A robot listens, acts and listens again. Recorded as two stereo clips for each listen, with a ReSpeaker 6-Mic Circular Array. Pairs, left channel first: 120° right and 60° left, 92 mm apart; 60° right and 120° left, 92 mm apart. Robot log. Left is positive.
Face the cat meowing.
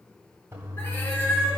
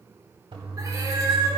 note: The cat meowing: 170° left.
cmd yaw +170
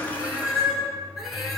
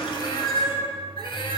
note: The cat meowing is now 30° right.
cmd yaw -30
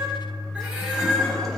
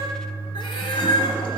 note: The cat meowing is now 25° right.
cmd yaw -25
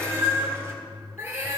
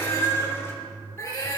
end: Found it: a cat meowing, straight ahead.